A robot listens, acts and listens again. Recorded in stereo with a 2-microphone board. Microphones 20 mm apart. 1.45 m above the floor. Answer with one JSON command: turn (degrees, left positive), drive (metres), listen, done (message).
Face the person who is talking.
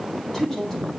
{"turn": 25}
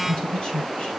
{"turn": 130}
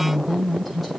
{"done": "Found it: a woman speaking, straight ahead."}